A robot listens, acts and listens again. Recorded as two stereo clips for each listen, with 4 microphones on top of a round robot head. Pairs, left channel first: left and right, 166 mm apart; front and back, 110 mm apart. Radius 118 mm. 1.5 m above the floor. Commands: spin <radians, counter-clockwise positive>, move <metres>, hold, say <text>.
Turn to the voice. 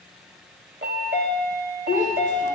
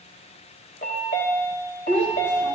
spin 2.27
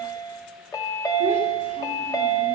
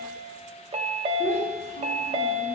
hold
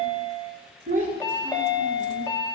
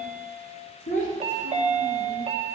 spin -0.70
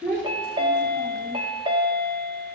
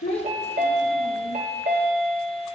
spin 0.26
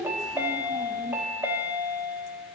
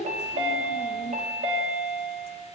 say Facing the child speaking.